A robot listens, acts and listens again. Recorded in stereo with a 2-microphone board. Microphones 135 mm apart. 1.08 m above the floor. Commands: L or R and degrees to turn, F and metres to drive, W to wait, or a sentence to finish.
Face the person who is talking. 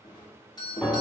W
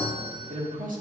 R90
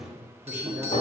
W
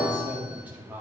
R15
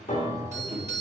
W
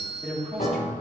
Facing the man speaking.